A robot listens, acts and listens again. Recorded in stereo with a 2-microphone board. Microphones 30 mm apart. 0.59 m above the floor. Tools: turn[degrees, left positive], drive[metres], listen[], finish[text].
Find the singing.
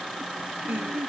Action: turn[-90]
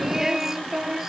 Thought: So it is at 15° right.
Action: turn[-15]
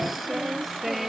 Action: finish[Facing the singing.]